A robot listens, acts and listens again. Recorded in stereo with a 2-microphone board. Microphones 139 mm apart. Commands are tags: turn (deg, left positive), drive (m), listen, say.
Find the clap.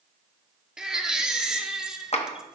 <turn deg="50"/>
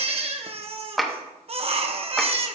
<say>Facing the clap, 1 to 2 m away.</say>